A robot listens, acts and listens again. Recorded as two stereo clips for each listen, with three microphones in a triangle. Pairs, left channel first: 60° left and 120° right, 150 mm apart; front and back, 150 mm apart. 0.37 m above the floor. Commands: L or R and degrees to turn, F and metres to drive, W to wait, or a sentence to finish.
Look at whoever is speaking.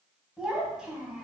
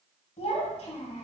R35
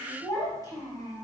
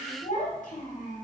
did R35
Found it: a child speaking, straight ahead.